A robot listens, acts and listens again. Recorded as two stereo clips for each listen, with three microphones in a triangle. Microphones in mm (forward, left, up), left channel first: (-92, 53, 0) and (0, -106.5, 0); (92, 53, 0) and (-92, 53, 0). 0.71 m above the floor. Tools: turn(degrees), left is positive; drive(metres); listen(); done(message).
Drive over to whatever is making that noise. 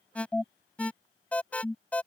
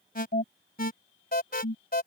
turn(degrees=35)
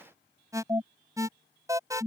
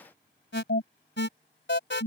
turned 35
turn(degrees=10)
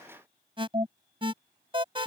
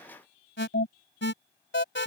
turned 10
drive(metres=1.0)
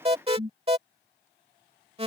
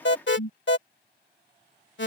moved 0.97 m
drive(metres=1.0)
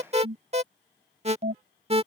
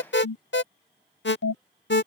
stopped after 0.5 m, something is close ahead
done("Arrived at the alarm, straight ahead.")